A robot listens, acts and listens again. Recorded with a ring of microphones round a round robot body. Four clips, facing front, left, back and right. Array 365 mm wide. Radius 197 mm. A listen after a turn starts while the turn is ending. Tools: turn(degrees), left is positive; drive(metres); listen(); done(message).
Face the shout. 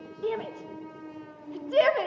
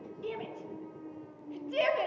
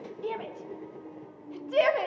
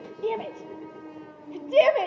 turn(degrees=-60)
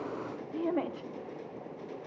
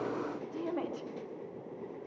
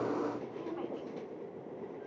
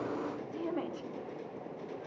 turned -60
done("Facing the shout.")